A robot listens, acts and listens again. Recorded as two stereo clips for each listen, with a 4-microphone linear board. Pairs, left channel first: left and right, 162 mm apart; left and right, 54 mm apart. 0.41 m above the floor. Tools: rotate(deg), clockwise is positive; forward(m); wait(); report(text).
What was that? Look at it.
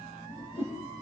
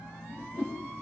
rotate(-35)
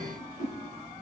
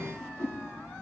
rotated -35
rotate(-110)
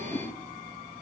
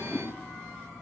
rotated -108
wait()
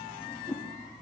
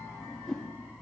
report("Facing the whoosh, over 4 m away.")